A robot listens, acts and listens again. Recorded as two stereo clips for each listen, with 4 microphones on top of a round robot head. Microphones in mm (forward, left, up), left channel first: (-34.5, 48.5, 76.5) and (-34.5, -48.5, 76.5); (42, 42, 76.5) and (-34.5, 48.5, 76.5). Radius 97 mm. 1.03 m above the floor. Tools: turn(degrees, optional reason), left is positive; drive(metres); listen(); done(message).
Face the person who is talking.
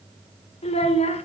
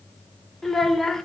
turn(degrees=80, reason="The child speaking: 80° left.")
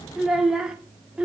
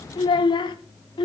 turn(degrees=-10, reason="The child speaking is now 10° right.")
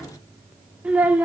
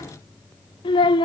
turn(degrees=-15, reason="The child speaking is now 15° right.")
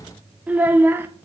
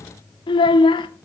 turn(degrees=-20, reason="The child speaking is now 20° right.")
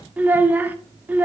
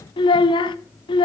turn(degrees=-15, reason="The child speaking is now 15° right.")
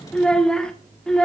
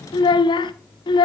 done("Facing the child speaking.")